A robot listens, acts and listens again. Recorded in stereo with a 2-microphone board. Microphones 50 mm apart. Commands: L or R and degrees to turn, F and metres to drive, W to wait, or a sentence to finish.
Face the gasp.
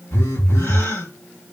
L55
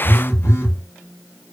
W
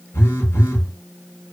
I heard a gasp, but can't make it out now. It was about straight ahead or 70° left.